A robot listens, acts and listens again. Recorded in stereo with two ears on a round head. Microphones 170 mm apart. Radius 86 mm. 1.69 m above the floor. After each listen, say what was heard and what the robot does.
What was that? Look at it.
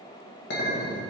The clink: about 55° left or 125° left. Turn 55° left.
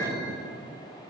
So it is at 10° left. Turn 10° left.
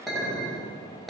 Found it: a clink, straight ahead.